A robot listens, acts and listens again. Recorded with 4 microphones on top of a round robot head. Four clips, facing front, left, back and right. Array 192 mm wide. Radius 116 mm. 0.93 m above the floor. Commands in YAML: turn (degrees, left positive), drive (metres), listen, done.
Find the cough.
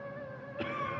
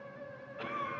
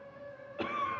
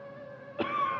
turn: -100
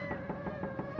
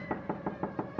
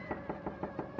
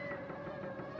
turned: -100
listen: true
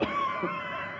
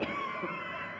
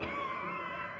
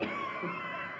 done: "Facing the cough."